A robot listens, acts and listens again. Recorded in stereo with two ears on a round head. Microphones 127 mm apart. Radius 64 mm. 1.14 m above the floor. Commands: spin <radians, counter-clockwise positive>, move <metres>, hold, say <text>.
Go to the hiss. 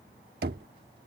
hold
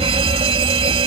hold
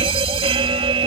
say I can't make out a hiss to turn to.